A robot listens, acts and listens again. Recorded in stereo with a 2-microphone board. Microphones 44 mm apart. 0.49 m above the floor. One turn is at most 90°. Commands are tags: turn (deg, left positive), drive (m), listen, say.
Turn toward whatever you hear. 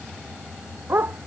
<turn deg="-50"/>
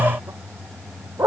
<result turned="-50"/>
<turn deg="-90"/>
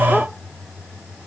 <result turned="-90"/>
<listen/>
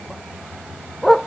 <turn deg="10"/>
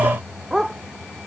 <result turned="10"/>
<say>Found it: a dog barking, straight ahead.</say>